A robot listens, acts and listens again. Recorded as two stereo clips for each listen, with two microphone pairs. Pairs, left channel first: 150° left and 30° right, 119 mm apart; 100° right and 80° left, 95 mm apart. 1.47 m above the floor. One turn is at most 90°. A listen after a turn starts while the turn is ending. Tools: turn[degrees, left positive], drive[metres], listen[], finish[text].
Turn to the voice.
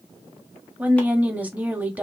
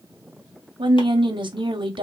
Thought: The woman speaking: 45° left.
Action: turn[45]
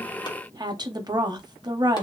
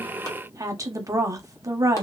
Thought: The woman speaking is now 25° left.
Action: turn[25]
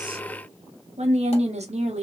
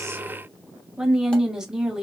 Action: finish[Found it: a woman speaking, straight ahead.]